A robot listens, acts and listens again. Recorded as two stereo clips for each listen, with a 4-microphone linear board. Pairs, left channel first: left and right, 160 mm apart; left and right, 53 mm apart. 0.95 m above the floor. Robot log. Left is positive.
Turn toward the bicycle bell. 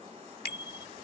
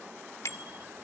note: The bicycle bell: about 70° left or 110° left.
cmd yaw +70
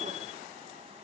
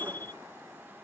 note: So it is at 40° left.
cmd yaw +40
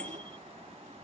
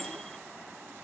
cmd idle
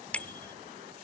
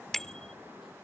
note: The bicycle bell is now 10° left.
cmd yaw +10
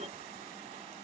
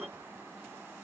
cmd idle
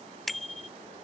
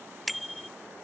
end: Facing the bicycle bell.